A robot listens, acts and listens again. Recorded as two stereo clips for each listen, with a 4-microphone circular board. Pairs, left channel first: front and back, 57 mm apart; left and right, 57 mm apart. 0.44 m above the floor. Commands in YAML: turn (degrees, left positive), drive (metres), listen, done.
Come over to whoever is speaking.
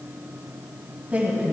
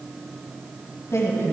turn: 115
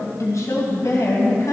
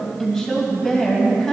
drive: 1.0
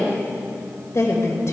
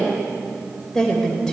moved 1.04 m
turn: 10
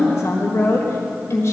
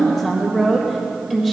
drive: 1.0
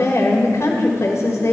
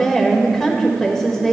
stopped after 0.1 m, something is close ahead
done: "Arrived at the woman speaking, straight ahead."